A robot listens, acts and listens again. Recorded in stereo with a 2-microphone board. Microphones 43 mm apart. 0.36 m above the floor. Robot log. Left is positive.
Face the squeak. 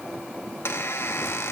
cmd yaw +90
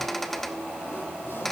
end: Found it: a squeak, straight ahead, under 1 m away.